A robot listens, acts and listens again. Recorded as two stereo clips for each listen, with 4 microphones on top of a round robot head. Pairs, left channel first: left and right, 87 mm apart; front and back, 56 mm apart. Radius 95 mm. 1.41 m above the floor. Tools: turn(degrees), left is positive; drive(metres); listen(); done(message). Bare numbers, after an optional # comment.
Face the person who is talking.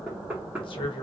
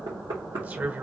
# The man speaking: 120° left.
turn(120)
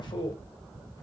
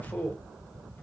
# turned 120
# The man speaking is now 60° left.
turn(60)
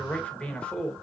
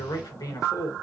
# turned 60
# The man speaking is now 10° left.
turn(10)
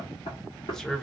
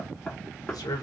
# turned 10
done("Facing the man speaking, 1 to 2 m away.")